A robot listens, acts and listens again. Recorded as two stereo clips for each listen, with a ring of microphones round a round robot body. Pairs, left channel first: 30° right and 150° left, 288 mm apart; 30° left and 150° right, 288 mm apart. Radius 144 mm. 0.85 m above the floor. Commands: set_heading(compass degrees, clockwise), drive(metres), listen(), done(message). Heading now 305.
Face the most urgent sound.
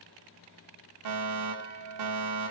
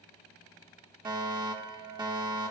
set_heading(170)
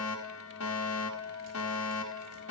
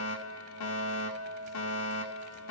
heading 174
done("Found it: a fire alarm, straight ahead.")